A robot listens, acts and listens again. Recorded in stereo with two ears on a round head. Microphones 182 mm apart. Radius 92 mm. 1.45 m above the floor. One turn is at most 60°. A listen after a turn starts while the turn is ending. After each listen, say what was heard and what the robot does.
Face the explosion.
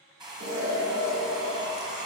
The explosion: about 50° right or 130° right. Turn 50° right.
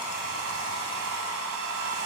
Keep listening.
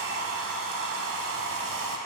I heard an explosion, but can't make it out now. It was about straight ahead or 80° right.